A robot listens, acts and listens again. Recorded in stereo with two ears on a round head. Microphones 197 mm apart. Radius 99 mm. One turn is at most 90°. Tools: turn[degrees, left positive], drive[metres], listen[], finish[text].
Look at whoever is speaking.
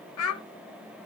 Action: turn[90]
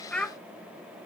Action: finish[Found it: a child speaking, straight ahead, 1 to 2 m away.]